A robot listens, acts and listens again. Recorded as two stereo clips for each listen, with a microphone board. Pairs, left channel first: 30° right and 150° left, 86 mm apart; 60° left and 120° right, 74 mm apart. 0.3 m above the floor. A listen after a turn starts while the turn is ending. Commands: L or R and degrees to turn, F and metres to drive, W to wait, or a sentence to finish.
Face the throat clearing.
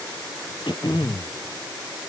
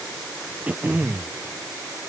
R50
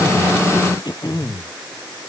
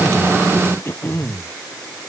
Facing the throat clearing.